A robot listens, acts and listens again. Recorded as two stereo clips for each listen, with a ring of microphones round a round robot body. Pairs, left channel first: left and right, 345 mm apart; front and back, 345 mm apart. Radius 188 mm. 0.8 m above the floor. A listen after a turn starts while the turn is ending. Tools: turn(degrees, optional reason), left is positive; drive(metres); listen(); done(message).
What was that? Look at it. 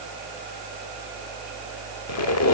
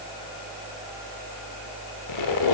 turn(degrees=45, reason="The squeak: 45° left.")
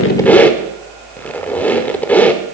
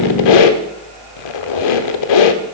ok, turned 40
done("Found it: a squeak, straight ahead.")